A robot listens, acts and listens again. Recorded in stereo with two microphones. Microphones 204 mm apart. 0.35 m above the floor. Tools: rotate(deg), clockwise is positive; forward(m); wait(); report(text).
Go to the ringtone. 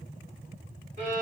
wait()
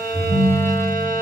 rotate(-35)
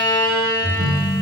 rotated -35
forward(1.0)
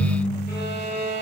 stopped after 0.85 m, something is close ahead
rotate(-10)
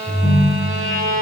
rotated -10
report("I am next to the ringtone.")